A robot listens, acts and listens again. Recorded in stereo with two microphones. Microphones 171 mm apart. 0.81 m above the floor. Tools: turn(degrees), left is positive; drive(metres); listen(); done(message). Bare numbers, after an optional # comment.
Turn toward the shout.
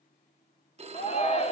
# The shout: about 35° left or 145° left.
turn(35)
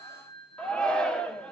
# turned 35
done("Facing the shout, 1 to 2 m away.")